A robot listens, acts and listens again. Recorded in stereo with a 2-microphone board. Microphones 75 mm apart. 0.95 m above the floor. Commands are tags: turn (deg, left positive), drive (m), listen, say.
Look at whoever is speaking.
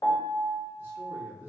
<turn deg="-30"/>
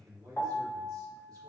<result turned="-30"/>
<turn deg="-115"/>
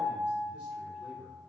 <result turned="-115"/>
<turn deg="-15"/>
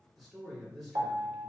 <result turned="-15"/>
<say>Found it: a man speaking, straight ahead.</say>